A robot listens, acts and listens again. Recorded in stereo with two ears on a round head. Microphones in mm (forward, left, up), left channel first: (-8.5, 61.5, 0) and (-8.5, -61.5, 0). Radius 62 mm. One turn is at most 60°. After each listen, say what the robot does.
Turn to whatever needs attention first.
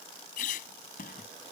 Keep listening.
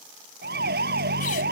Turn 60° right.
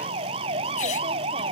Turn 40° right.
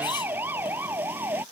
Turn 15° right.
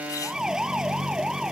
Facing the siren.